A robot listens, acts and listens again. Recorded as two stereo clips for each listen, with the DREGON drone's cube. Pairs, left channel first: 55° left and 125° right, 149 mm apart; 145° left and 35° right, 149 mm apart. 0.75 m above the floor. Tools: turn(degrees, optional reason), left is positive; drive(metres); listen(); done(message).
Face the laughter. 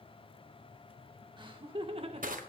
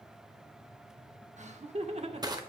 turn(degrees=-80, reason="The laughter: 80° right.")
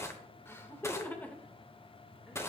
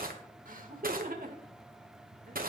turn(degrees=-25, reason="The laughter is now 25° right.")
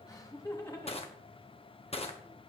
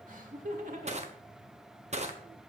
turn(degrees=-10, reason="The laughter is now 10° right.")
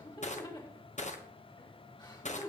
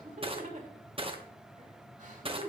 done("Facing the laughter, 2 to 4 m away.")